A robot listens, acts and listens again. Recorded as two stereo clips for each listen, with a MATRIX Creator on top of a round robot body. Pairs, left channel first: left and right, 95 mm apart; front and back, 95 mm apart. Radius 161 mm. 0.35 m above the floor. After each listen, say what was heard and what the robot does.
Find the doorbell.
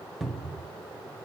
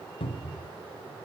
Keep listening.
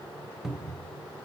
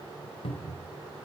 Keep listening.
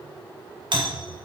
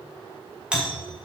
The doorbell: 100° right. Turn 100° right.
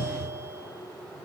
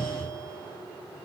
Keep listening.
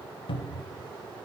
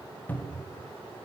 Keep listening.
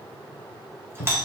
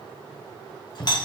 The doorbell is now 30° right. Turn 30° right.
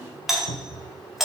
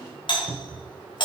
Found it: a doorbell, straight ahead, 2 to 4 m away.